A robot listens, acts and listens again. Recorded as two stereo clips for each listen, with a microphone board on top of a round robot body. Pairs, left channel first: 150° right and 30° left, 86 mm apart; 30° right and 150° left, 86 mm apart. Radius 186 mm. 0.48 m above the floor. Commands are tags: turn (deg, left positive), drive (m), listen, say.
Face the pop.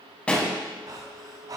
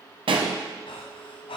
<turn deg="130"/>
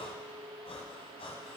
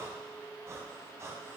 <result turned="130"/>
<say>Facing where the pop came from. I can't hear it now.</say>